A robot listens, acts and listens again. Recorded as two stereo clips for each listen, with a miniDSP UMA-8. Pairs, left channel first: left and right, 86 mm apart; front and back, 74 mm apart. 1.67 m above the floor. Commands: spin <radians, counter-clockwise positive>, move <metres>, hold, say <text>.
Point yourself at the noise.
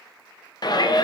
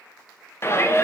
spin 0.96
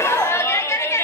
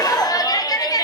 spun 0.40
spin 0.52
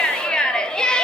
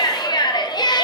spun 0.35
spin 0.17
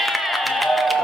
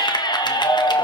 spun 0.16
say Found it: a shout, straight ahead.